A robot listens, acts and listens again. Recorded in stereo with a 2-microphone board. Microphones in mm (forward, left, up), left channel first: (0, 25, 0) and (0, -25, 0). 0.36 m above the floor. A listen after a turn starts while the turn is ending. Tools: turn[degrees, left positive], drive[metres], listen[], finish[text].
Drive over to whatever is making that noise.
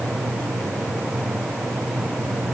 Action: listen[]
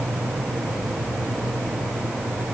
Action: listen[]
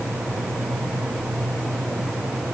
Action: finish[I can't make out anything.]